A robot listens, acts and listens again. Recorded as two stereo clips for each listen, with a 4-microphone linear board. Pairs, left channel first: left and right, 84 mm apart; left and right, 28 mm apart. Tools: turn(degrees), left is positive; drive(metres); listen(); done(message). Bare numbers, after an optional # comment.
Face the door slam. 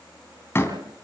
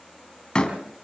# The door slam: about 30° left or 150° left.
turn(30)
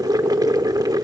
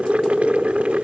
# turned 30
listen()
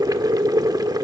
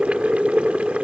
done("I heard a door slam, but can't make it out now. It was about straight ahead or 120° left.")